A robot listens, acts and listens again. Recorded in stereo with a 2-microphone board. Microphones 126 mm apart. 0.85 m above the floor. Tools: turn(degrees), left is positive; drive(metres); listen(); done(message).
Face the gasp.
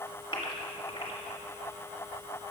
turn(degrees=40)
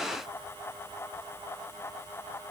listen()
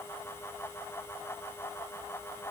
done("I heard a gasp, but can't make it out now. It was about straight ahead or 100° left.")